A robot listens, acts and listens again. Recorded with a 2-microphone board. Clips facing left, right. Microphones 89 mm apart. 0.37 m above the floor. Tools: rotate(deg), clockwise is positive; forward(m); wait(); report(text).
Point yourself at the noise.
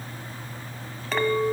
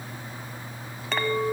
rotate(-30)
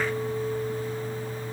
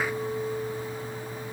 wait()
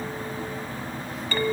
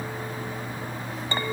rotate(25)
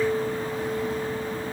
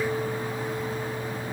report("Found it: a clink, straight ahead.")